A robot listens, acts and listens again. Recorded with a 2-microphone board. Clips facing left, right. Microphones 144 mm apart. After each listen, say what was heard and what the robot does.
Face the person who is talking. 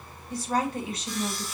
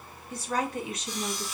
The woman speaking: about 35° left or 145° left. Turn 35° left.
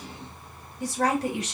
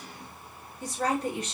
So it is at 110° left. Turn 110° left.
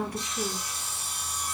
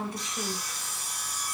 The woman speaking is now 20° right. Turn 20° right.
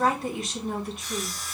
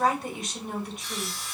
Facing the woman speaking, 1 to 2 m away.